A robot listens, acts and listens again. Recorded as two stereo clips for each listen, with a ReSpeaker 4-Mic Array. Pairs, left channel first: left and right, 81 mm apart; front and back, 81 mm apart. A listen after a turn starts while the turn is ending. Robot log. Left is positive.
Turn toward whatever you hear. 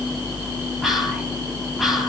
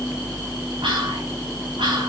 note: The whispering: 175° right.
cmd yaw -175
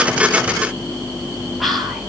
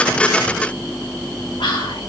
end: Facing the whispering.